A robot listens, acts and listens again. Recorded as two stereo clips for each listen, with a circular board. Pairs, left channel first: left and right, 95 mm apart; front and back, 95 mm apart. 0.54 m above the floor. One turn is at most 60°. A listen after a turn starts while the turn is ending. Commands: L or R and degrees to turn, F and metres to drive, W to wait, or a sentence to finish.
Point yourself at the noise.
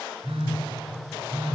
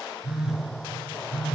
R60
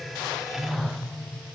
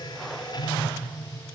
R40
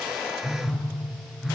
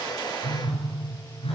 Facing the phone buzzing, 2 to 4 m away.